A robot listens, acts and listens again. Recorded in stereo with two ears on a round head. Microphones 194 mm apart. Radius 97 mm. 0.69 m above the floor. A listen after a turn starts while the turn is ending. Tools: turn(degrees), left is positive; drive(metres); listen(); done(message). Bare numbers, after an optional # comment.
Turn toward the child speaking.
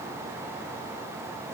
listen()
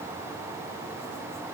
listen()
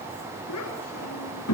turn(90)
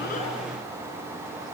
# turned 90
listen()
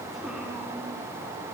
listen()
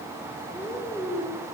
done("Found it: a child speaking, straight ahead.")